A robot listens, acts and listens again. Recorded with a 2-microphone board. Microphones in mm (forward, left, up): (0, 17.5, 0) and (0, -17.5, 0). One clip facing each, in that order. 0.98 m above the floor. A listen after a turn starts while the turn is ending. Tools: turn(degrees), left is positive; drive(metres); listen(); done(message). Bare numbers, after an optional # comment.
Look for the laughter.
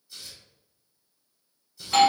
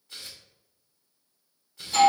listen()
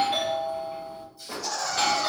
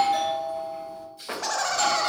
# The laughter: about 60° right or 120° right.
turn(-60)
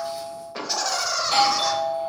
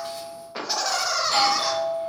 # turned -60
# So it is at 10° right.
turn(-10)
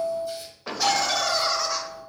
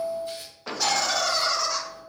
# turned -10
done("Facing the laughter.")